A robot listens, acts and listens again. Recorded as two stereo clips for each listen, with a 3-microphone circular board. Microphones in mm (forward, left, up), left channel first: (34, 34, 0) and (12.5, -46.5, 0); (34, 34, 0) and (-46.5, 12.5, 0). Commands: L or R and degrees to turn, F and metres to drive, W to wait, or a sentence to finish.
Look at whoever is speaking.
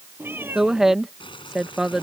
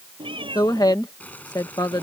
R20
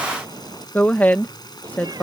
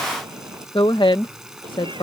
Facing the woman speaking.